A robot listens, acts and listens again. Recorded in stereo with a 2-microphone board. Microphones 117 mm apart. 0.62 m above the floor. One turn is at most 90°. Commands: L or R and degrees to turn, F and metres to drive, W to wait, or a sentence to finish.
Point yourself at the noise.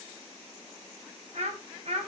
R65
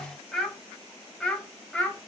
L10
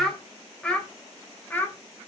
L15
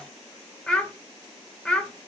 L10
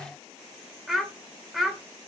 Facing the child speaking, 1 to 2 m away.